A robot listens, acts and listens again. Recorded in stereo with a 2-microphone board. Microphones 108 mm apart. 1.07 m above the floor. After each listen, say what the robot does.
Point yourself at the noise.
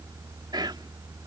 Turn 40° right.
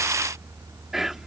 Facing the whispering.